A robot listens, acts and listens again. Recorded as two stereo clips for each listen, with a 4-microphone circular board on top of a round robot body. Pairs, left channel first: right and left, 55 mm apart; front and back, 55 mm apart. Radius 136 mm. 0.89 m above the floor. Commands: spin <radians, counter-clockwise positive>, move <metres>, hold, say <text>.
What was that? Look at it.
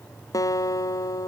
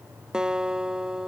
spin -1.83
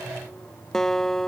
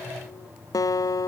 say Found it: a guitar, straight ahead.